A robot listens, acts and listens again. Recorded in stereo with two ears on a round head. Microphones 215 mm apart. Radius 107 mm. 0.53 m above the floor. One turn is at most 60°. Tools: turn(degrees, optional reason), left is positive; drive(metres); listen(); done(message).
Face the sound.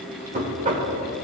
turn(degrees=-30, reason="The knocking: about 30° right or 150° right.")
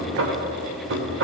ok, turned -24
turn(degrees=-60, reason="So it is at 120° right.")
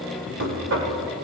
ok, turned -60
turn(degrees=-60, reason="The knocking is now 60° right.")
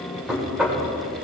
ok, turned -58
done("Found it: knocking, straight ahead, 1 to 2 m away.")